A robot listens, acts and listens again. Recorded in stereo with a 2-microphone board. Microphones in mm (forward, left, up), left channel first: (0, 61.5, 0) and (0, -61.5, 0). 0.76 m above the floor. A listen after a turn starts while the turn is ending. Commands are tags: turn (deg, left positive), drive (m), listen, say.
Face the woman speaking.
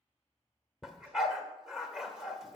<listen/>
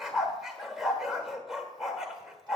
<listen/>
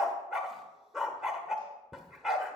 <say>I can't make out a woman speaking, only a dog barking.</say>